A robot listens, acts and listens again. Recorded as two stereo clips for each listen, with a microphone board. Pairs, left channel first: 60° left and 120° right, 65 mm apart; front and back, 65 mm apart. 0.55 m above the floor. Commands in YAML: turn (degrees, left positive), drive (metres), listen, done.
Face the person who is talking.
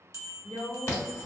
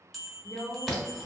turn: 10
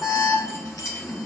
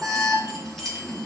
listen: true
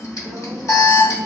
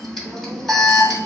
listen: true
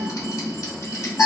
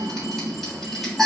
done: "I heard a woman speaking from this way, but can't make it out now."